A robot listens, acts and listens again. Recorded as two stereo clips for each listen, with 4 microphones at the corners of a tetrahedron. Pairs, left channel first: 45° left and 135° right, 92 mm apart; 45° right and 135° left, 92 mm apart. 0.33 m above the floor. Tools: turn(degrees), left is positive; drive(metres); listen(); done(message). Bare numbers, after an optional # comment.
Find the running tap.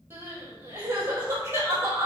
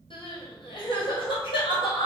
listen()
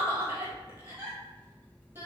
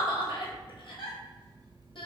listen()
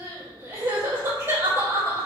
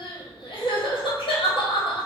done("I can't make out a running tap to turn to.")